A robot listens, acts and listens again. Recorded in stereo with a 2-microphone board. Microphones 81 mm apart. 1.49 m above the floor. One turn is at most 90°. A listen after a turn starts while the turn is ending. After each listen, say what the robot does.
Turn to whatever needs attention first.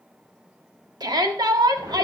Turn 65° right.
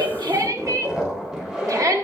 Turn 50° right.
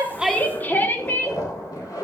Turn 25° left.
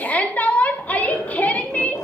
Turn 20° left.
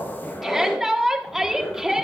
Found it: a shout, straight ahead.